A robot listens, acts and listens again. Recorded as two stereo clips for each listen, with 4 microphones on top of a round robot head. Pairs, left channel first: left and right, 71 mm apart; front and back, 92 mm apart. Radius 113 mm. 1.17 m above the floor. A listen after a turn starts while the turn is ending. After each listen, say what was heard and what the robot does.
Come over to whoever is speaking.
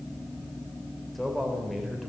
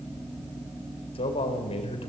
Drive 1.0 m forward.
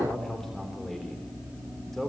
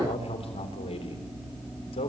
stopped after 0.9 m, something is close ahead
Blocked. The man speaking is further on, straight ahead.